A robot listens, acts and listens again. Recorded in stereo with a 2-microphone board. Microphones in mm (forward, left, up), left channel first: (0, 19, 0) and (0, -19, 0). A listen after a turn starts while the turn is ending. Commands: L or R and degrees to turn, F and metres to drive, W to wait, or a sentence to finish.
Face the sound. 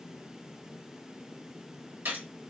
R70
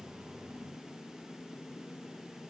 W
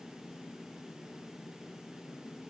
I heard a gunshot, but can't make it out now. It was about straight ahead or 40° right.